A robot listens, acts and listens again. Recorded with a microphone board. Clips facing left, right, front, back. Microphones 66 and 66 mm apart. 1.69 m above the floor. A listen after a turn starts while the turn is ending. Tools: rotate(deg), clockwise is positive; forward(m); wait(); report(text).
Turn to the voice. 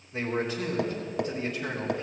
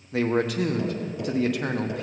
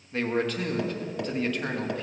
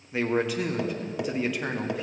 rotate(100)
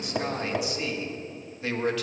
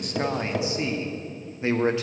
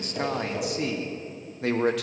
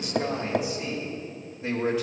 rotate(25)
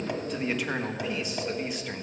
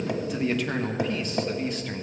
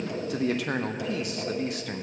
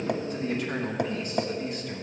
rotate(-10)
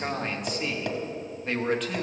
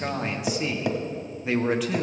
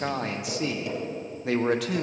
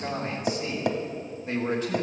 report("Facing the man speaking.")